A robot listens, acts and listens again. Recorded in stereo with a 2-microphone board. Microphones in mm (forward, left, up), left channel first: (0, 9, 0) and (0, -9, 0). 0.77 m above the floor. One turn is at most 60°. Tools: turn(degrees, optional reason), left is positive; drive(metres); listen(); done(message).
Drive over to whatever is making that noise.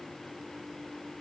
listen()
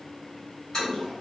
turn(degrees=35, reason="The toilet flushing: about 35° left or 145° left.")
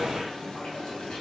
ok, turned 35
turn(degrees=60, reason="So it is at 110° left.")
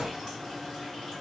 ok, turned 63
turn(degrees=50, reason="The toilet flushing is now 50° left.")
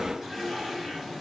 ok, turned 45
drive(metres=1.0)
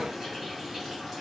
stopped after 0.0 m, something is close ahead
done("Something is in my way. I am facing the toilet flushing but have not reached it.")